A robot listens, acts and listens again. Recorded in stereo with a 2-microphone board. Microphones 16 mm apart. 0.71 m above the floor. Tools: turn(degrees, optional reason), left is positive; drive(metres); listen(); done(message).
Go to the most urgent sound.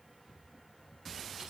listen()
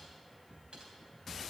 listen()
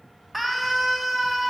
turn(degrees=-30)
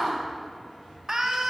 turn(degrees=-135, reason="So it is at 135° right.")
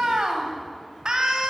turn(degrees=-55, reason="The scream is now 55° right.")
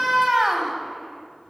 turn(degrees=-15, reason="The scream is now 15° right.")
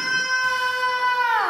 drive(metres=1.0)
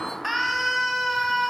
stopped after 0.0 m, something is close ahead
done("Blocked. The scream is further on, straight ahead.")